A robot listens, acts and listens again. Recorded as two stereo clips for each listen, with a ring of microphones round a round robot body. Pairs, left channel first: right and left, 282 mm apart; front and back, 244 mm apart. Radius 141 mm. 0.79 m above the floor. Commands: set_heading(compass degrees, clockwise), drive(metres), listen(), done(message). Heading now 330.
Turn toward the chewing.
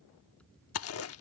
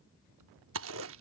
set_heading(105)
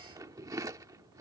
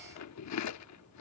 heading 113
set_heading(103)
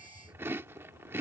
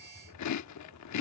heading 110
set_heading(100)
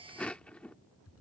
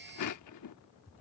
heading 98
done("Found it: chewing, straight ahead.")